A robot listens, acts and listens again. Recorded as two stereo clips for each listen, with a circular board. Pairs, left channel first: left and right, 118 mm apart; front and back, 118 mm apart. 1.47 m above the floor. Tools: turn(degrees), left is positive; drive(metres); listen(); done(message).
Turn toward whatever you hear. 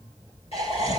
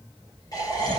turn(degrees=55)
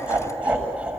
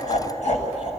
turn(degrees=-10)
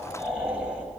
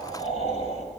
done("Facing the laughter.")